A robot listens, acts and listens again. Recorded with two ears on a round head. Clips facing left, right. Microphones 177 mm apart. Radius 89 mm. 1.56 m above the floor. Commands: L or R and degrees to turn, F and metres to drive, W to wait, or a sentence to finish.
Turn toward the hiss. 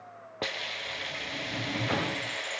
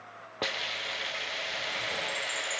L30
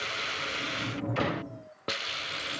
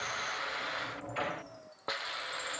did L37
L145
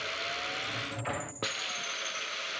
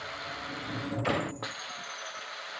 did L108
L35
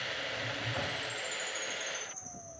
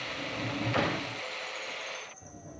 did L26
L10
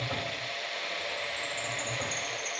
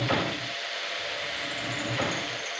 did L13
Found it: a hiss, straight ahead.